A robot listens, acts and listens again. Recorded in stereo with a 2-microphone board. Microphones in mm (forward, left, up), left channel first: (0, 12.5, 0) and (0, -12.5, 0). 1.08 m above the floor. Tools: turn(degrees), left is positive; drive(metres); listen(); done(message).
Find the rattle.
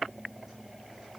listen()
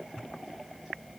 listen()
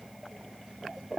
done("I can't make out a rattle to turn to.")